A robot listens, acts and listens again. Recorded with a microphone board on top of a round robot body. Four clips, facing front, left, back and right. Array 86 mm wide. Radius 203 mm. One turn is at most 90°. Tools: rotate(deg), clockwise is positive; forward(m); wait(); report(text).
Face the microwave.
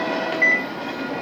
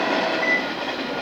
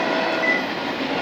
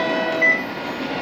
rotate(35)
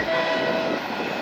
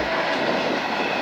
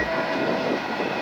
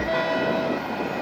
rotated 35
wait()
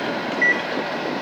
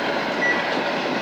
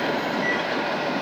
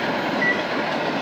rotate(10)
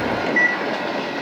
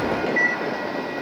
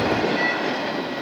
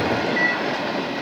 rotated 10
report("Found it: a microwave, straight ahead.")